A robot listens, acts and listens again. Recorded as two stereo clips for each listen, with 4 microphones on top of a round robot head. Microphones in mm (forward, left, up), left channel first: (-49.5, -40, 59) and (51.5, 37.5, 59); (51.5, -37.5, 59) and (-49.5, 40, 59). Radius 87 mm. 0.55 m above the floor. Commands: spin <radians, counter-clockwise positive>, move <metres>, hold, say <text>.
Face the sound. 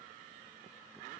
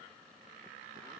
hold
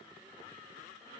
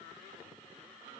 hold
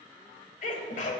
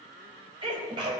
spin -2.88
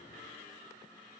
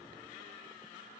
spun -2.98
spin 0.17
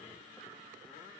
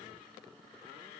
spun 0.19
say Facing where the sneeze came from. I can't hear it now.